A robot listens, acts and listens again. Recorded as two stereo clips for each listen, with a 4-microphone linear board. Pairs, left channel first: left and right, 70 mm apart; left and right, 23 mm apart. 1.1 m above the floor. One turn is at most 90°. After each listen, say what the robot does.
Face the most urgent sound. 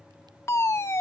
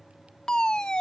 Turn 40° left.
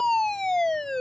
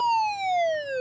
Found it: a fire alarm, straight ahead.